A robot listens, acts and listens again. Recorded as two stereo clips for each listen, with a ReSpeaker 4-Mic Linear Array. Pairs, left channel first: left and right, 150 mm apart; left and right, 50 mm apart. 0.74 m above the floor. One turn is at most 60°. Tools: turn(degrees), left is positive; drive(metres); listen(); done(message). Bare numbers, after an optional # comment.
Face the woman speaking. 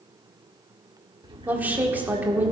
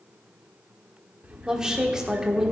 turn(-30)
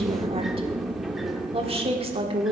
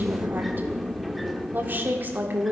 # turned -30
# So it is at 140° right.
turn(-60)
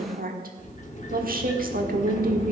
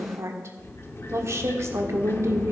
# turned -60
# The woman speaking is now 80° right.
turn(-60)
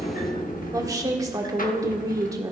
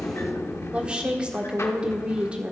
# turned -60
# The woman speaking is now 25° right.
turn(-25)
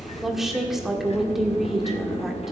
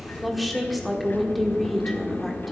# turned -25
done("Found it: a woman speaking, straight ahead, 1 to 2 m away.")